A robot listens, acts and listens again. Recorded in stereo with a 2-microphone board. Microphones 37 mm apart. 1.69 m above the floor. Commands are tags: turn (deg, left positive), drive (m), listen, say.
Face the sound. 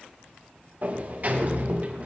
<turn deg="-45"/>
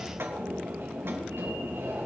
<turn deg="-85"/>
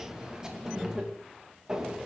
<turn deg="-15"/>
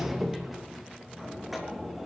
<say>Found it: a sliding door, straight ahead, 2 to 4 m away.</say>